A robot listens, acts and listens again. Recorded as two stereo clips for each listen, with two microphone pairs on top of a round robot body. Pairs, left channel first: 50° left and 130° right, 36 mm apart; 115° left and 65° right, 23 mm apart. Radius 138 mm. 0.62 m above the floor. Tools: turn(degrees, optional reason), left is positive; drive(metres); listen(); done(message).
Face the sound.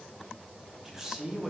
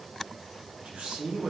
turn(degrees=-50, reason="The man speaking: 50° right.")
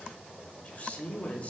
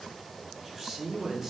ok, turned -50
done("Facing the man speaking, 1 to 2 m away.")